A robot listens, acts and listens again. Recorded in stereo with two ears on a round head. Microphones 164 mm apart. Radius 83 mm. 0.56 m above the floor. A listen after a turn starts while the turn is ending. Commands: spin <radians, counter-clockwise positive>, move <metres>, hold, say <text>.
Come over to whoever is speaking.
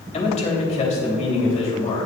spin 0.70
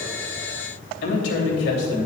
spin 1.66
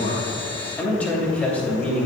spin 0.17
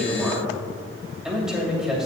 move 1.0
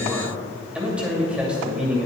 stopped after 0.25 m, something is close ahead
say Blocked. The man speaking is further on, straight ahead.